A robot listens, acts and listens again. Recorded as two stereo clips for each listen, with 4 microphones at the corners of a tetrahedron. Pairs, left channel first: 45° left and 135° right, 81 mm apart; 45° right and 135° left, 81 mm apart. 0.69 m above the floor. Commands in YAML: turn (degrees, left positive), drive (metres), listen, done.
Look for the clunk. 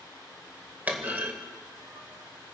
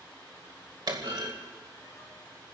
turn: 155
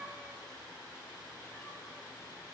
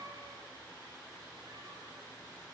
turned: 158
done: "I heard a clunk from this way, but can't make it out now."